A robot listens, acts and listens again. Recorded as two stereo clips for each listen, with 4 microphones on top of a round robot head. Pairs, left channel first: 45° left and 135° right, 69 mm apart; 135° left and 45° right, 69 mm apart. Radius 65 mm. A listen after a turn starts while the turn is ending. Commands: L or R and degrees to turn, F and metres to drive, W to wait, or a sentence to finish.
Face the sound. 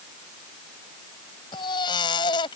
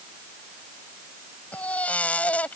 L60
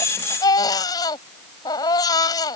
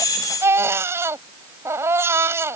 L10
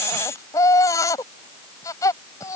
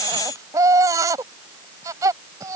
Facing the baby crying.